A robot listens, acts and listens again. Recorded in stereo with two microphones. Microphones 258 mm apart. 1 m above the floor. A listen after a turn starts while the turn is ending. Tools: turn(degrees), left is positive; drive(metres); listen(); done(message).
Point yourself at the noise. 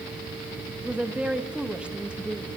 turn(degrees=-30)
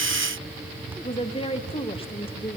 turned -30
turn(degrees=25)
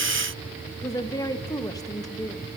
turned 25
turn(degrees=15)
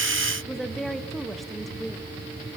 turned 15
done("Found it: a woman speaking, straight ahead.")